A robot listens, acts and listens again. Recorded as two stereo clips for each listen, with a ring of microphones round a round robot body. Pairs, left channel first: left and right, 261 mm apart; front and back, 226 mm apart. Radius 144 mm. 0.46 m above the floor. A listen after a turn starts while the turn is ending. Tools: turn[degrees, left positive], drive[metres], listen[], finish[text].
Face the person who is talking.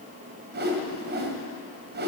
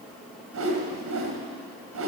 Action: listen[]
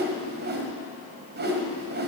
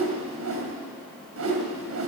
Action: listen[]
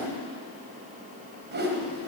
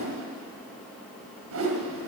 Action: finish[I can't make out anyone speaking, only a whoosh.]